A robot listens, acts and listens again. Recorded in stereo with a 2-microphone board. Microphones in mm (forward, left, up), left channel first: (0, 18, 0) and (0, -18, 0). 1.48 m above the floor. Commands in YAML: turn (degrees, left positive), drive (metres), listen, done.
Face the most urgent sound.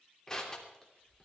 listen: true
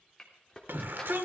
turn: -70
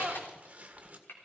turn: -40
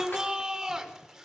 turn: -10
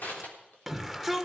done: "Facing the shout, 1 to 2 m away."